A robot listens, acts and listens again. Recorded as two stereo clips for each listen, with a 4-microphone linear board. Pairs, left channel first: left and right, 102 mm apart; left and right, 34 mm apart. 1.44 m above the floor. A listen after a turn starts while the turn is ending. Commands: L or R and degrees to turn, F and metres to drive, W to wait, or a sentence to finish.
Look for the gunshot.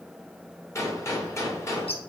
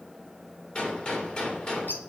L30
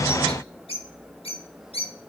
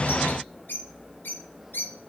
W
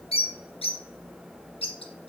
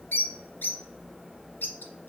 I heard a gunshot, but can't make it out now. It was about straight ahead or 120° left.